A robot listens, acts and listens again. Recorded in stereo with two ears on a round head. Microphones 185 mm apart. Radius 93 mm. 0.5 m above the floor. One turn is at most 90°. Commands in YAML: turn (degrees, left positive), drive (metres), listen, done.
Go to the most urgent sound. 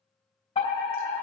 turn: 30
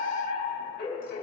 turn: 90
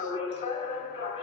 turn: 35
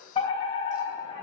turn: 30
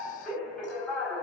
drive: 1.0
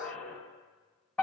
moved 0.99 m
drive: 1.0
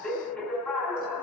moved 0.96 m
turn: 10
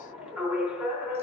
drive: 1.0
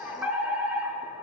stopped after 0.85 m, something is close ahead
turn: -15
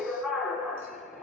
done: "Arrived at the fire alarm, straight ahead."